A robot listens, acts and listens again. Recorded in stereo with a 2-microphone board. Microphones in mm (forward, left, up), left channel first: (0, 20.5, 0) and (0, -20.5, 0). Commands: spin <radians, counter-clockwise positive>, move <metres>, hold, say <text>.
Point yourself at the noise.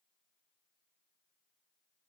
hold
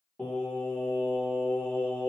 spin 1.05
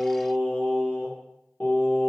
spin 0.79
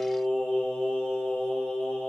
spin 0.35
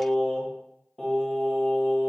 say Facing the singing, 1 to 2 m away.